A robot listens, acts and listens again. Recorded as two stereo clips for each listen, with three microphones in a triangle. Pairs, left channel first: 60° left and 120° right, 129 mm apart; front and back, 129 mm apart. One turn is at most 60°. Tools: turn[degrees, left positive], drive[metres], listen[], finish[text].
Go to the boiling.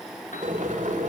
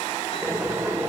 Thought: The boiling: 110° right.
Action: turn[-60]
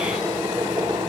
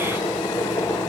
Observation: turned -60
Thought: The boiling is now 70° right.
Action: turn[-60]
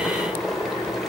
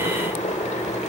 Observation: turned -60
Thought: The boiling is now 30° right.
Action: turn[-30]
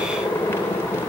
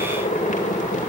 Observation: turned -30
Thought: The boiling is now 15° right.
Action: turn[-15]
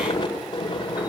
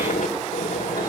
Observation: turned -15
Action: drive[1.0]
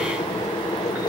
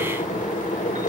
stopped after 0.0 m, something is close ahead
Action: finish[Blocked. The boiling is further on, straight ahead.]